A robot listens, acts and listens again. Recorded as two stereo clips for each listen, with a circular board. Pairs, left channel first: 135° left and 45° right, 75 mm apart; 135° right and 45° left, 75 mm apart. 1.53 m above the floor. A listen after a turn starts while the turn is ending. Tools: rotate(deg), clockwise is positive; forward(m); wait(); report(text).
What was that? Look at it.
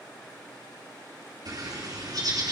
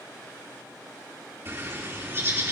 rotate(10)
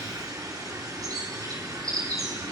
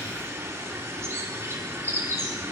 report("Found it: a bird, straight ahead, 2 to 4 m away.")